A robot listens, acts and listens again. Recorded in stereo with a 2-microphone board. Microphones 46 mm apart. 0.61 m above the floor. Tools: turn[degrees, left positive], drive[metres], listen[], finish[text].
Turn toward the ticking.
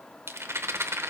Action: listen[]
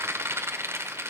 Action: listen[]
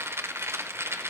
Action: finish[I can't make out ticking to turn to.]